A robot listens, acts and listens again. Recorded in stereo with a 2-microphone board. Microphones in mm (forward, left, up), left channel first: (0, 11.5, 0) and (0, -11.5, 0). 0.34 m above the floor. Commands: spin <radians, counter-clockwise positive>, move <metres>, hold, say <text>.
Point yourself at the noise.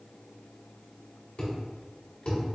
spin 0.96
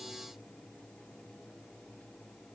hold
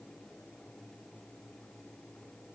say I heard a thud, but can't make it out now. It was about straight ahead or 70° left.